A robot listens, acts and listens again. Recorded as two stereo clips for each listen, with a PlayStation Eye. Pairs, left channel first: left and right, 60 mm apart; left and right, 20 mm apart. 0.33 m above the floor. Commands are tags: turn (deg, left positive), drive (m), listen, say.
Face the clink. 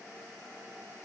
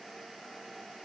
<listen/>
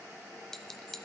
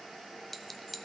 <turn deg="30"/>
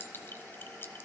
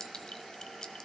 <turn deg="140"/>
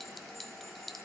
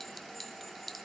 <say>Facing the clink.</say>